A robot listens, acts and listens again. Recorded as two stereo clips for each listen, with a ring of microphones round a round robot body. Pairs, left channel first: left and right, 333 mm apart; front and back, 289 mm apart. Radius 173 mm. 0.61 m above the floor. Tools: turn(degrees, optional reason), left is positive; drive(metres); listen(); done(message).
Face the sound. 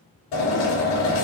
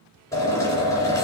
turn(degrees=80, reason="The drill: 80° left.")
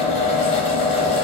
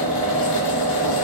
turn(degrees=20, reason="The drill is now 20° left.")
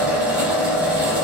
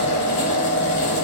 done("Found it: a drill, straight ahead.")